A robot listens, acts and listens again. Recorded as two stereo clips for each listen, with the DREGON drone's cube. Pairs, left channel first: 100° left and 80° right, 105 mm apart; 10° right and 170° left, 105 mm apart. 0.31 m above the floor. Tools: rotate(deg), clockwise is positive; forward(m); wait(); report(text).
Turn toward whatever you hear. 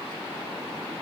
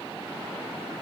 wait()
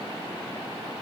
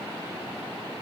wait()
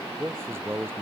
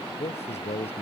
rotate(10)
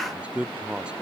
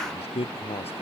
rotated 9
report("Found it: a man speaking, straight ahead.")